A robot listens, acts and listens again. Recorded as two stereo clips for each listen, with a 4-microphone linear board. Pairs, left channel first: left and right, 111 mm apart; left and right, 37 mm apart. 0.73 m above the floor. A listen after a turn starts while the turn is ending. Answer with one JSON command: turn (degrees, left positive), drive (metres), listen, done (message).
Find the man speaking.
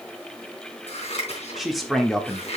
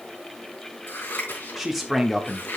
{"turn": 30}
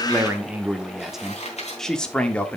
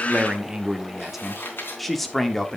{"turn": 30}
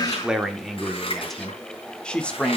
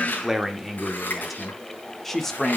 {"turn": 30}
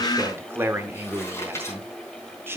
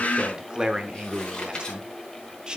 {"turn": -20}
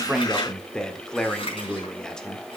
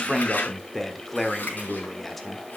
{"done": "Facing the man speaking, 1 to 2 m away."}